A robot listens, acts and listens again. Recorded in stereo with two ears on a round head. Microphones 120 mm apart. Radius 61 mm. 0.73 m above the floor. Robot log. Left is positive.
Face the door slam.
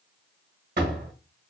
note: The door slam: about 70° right or 110° right.
cmd yaw -70
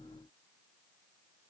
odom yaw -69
cmd idle
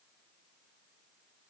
end: I heard a door slam, but can't make it out now. It was about straight ahead or 40° right.